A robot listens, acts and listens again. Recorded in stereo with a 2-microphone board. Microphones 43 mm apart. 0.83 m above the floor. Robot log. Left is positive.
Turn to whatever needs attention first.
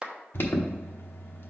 note: The alarm: about 55° left or 125° left.
cmd yaw +55
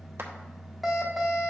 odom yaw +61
end: Facing the alarm, 1 to 2 m away.